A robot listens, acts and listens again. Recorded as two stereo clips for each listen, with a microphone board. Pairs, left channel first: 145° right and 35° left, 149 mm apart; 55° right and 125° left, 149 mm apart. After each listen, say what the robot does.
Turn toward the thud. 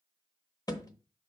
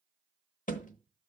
Turn 80° right.
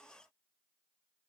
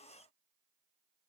Facing where the thud came from. I can't hear it now.